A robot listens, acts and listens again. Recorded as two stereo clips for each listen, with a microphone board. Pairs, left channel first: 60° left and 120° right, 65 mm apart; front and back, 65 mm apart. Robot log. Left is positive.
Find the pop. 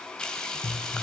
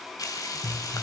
note: The pop: 100° left.
cmd yaw +100
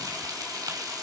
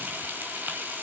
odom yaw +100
end: Facing where the pop came from. I can't hear it now.